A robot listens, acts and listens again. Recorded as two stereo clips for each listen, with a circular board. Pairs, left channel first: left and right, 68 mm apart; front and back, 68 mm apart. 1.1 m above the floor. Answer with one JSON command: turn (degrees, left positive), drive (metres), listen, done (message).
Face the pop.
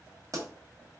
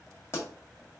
{"turn": -50}
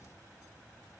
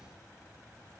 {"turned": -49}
{"done": "I heard a pop from this way, but can't make it out now."}